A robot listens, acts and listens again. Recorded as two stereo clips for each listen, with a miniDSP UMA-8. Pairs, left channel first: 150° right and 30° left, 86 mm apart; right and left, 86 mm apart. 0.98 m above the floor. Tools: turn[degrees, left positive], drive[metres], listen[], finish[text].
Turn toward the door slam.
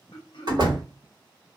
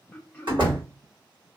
Thought: The door slam: 65° left.
Action: turn[65]
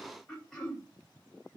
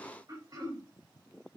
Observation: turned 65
Action: finish[I heard a door slam from this way, but can't make it out now.]